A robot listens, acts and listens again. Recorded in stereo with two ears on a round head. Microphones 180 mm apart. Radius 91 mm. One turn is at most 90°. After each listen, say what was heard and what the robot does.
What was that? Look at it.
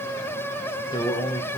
The man speaking: about 20° left or 160° left. Turn 20° left.
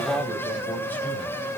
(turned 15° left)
So it is at 10° left. Turn 10° left.
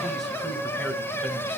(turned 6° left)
Facing the man speaking, 1 to 2 m away.